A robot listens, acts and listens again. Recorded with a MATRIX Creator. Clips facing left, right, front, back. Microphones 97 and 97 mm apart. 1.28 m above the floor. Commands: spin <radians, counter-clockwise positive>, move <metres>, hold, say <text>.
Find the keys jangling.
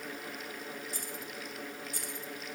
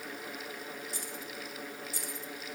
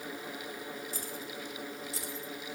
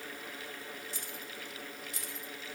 spin 0.96
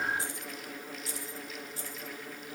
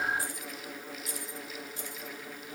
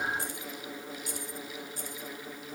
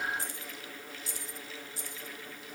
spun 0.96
spin 0.61
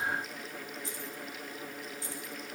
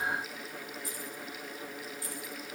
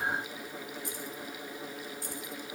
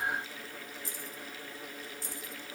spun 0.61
spin 0.52
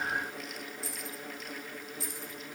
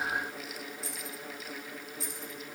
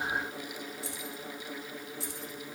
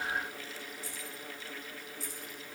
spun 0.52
say Found it: keys jangling, straight ahead.